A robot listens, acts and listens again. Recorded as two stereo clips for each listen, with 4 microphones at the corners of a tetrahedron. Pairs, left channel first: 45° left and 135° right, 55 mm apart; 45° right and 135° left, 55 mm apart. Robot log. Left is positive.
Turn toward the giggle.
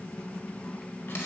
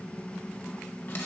cmd idle
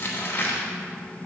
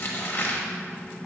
cmd idle
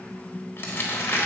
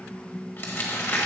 end: I can't make out a giggle to turn to.